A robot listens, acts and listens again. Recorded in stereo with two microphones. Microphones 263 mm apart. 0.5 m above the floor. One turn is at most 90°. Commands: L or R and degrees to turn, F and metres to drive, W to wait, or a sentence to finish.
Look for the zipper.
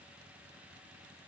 W
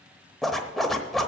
L30
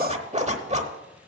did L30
R30
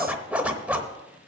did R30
Found it: a zipper, straight ahead, under 1 m away.